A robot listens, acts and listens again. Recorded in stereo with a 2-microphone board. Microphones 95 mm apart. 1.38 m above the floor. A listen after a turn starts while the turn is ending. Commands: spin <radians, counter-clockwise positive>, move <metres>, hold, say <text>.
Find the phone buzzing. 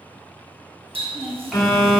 spin 0.79
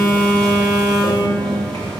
spin 0.17
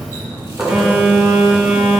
say Found it: a phone buzzing, straight ahead.